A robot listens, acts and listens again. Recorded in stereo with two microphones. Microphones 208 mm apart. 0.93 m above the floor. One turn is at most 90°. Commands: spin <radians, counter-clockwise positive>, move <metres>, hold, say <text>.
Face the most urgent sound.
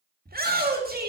spin -0.79
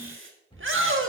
spin -1.48
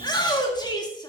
spin 0.35
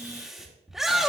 say Found it: a shout, straight ahead.